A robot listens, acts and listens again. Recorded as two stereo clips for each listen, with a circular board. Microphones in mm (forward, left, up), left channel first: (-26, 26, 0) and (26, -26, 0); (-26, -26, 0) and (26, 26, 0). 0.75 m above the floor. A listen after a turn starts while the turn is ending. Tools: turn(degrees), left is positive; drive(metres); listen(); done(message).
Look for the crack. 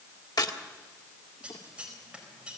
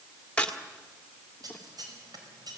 turn(degrees=150)
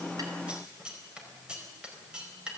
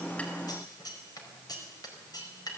done("I heard a crack from this way, but can't make it out now.")